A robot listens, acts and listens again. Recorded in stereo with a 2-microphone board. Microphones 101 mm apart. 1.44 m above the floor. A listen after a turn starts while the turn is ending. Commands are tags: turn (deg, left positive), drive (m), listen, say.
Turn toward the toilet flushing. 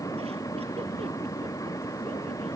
<listen/>
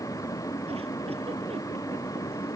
<listen/>
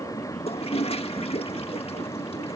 <turn deg="90"/>
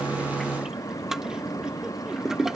<say>Found it: a toilet flushing, straight ahead.</say>